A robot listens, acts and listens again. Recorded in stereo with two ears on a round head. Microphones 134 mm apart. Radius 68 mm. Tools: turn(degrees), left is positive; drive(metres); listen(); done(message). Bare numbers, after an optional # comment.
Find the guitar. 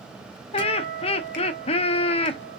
# The guitar: about 60° right or 120° right.
turn(-60)
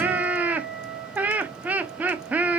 done("Found it: a guitar, straight ahead.")